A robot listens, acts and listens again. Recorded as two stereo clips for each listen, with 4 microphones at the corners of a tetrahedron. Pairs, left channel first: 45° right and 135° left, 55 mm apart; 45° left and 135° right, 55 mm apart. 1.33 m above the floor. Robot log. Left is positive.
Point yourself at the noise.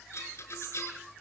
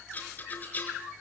note: The rattle: 10° right.
cmd yaw -10
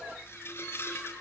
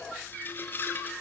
end: Facing the rattle.